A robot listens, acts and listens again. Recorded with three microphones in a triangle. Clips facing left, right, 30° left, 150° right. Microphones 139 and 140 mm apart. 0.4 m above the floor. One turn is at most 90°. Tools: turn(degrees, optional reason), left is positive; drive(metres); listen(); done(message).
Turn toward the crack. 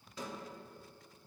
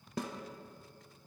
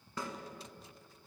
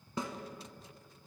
listen()
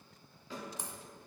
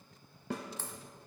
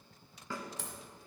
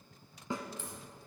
turn(degrees=15, reason="The crack: 15° left.")
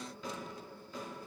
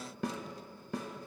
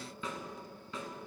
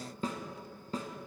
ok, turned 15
done("I heard a crack from this way, but can't make it out now.")